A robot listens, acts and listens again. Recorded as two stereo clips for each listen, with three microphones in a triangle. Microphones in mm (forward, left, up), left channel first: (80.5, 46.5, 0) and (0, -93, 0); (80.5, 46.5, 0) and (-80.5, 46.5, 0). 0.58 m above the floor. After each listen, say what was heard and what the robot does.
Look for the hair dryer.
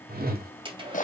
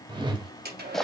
The hair dryer: 175° right. Turn 175° right.
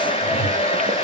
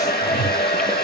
The hair dryer is now 10° left. Turn 10° left.
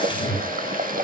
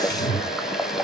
Keep listening.
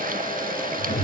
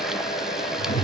Facing the hair dryer.